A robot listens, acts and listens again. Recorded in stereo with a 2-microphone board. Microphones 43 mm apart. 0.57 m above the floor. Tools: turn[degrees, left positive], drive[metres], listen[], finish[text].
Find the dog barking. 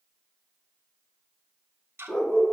Action: turn[30]
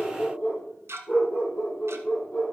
Thought: So it is at 140° left.
Action: turn[140]
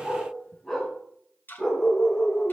Thought: The dog barking is now 15° left.
Action: turn[15]
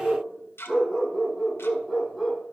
Action: finish[Facing the dog barking.]